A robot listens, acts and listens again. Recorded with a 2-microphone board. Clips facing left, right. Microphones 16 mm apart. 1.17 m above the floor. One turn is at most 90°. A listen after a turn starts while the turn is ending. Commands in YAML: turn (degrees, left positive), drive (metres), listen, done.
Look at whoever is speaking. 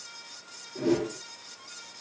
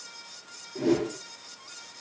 listen: true
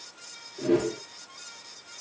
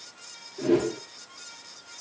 listen: true
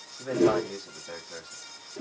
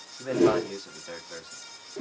turn: -45
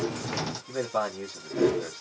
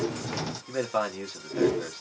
turn: -80
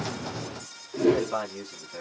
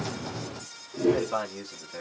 done: "Found it: a man speaking, straight ahead."